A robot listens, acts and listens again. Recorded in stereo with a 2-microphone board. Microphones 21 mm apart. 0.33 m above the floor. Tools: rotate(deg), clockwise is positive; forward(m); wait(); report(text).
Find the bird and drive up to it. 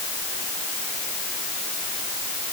wait()
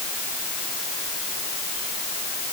wait()
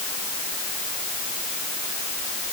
report("I can't make out a bird to turn to.")